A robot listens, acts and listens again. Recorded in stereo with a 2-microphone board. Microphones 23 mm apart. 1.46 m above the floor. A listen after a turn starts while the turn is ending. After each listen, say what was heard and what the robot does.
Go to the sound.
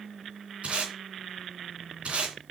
The tape being pulled: about 65° right or 115° right. Turn 65° right.
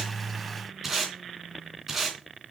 So it is at 10° right. Turn 10° right.
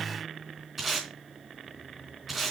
Drive 1.0 m forward.
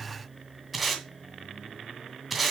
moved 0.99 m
Drive 1.0 m forward.
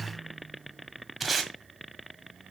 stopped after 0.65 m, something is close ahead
I am next to the tape being pulled.